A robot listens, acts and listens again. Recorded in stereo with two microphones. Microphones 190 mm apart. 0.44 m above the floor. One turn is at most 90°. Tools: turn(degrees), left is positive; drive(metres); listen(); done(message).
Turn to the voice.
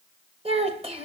turn(degrees=-30)
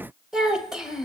done("Found it: a child speaking, straight ahead.")